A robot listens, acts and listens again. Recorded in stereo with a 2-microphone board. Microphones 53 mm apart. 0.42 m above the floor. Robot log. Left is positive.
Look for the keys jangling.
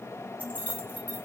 note: The keys jangling: about 30° right or 150° right.
cmd yaw -30
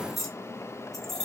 note: So it is at 10° left.
cmd yaw +10
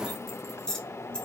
note: The keys jangling is now 15° left.
cmd yaw +15
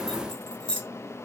note: The keys jangling is now 20° left.
cmd yaw +20
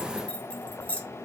note: The keys jangling is now 30° left.
cmd yaw +30
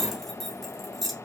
end: Facing the keys jangling, 1 to 2 m away.